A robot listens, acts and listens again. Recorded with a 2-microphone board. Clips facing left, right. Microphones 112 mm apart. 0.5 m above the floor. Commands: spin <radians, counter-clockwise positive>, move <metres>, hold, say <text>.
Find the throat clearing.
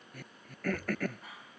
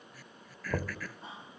spin 0.96
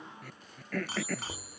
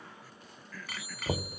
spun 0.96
spin 1.13
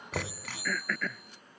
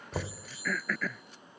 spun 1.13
say Facing the throat clearing.